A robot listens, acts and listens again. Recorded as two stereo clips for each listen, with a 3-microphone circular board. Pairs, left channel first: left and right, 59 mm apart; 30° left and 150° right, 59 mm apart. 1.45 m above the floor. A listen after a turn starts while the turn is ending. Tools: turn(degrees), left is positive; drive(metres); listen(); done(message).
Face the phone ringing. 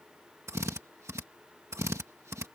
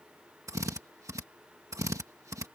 listen()
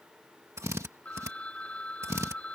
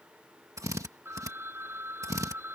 turn(degrees=160)
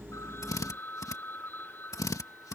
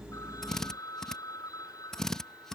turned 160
turn(degrees=35)
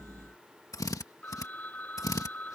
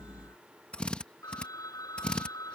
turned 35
turn(degrees=25)
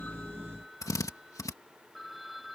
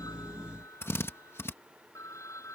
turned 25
done("Facing the phone ringing.")